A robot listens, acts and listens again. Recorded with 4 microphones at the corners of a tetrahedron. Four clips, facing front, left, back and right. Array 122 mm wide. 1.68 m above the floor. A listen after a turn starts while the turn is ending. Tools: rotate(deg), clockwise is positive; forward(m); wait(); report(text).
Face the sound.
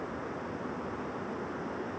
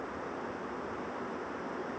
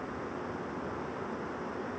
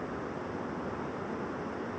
wait()
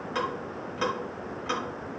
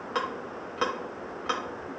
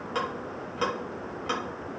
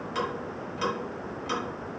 rotate(-100)
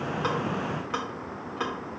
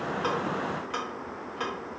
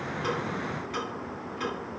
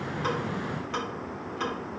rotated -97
report("Facing the ticking.")